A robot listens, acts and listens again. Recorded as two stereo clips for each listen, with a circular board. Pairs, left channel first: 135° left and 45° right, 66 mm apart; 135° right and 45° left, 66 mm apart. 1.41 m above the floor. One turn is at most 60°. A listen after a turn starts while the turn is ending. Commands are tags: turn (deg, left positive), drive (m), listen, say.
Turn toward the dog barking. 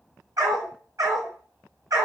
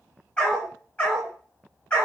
<turn deg="-60"/>
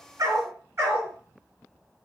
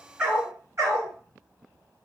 <say>Facing the dog barking, over 4 m away.</say>